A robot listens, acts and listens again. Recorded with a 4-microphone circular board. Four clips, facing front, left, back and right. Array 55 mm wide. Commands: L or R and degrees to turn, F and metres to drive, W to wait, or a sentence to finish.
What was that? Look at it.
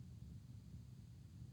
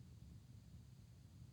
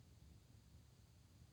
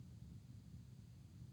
W
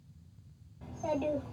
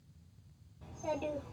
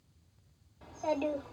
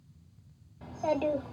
R110
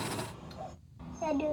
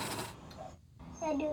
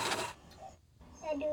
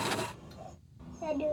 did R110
L15
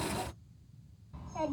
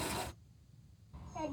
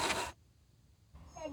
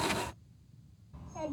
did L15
Facing the child speaking.